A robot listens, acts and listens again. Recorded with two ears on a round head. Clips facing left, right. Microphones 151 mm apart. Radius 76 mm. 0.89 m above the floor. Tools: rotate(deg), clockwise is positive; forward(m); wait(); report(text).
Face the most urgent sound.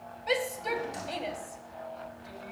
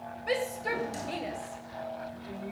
rotate(-30)
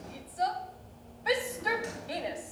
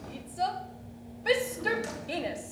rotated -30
rotate(30)
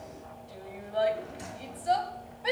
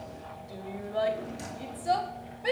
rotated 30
rotate(15)
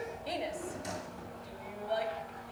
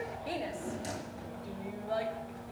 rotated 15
report("Found it: a shout, straight ahead.")